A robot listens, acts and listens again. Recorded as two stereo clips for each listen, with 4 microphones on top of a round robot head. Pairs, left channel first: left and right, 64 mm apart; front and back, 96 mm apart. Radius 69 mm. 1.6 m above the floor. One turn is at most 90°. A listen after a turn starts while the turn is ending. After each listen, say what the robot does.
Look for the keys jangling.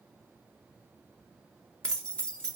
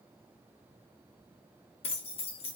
Turn 15° left.
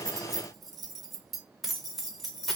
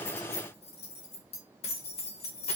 Facing the keys jangling, under 1 m away.